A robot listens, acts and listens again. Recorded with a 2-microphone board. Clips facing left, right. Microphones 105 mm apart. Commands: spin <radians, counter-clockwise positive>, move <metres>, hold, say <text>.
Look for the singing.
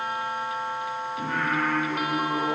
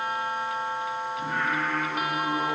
spin 1.22
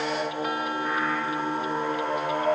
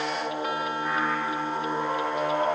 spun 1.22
say Facing the singing.